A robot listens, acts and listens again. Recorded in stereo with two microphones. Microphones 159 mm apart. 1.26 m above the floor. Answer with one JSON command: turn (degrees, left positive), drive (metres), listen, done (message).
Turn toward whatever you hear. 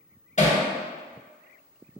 {"turn": 50}
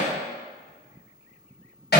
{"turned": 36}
{"turn": 95}
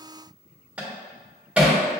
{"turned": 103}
{"turn": -10}
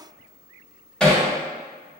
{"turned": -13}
{"done": "Found it: hammering, straight ahead, 1 to 2 m away."}